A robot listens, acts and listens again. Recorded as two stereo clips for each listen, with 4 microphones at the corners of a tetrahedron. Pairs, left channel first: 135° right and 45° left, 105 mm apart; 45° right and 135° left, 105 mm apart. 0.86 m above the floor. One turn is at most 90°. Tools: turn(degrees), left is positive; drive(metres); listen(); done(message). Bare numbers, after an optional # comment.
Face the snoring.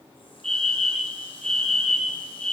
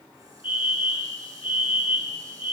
listen()
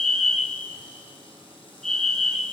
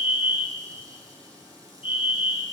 listen()
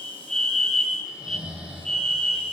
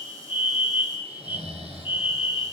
# The snoring: 125° left.
turn(90)
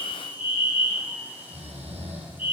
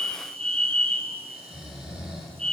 # The snoring is now 50° left.
turn(50)
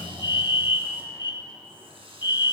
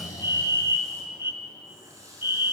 # The snoring is now 10° left.
turn(10)
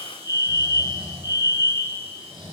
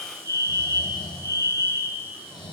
done("Found it: snoring, straight ahead, over 4 m away.")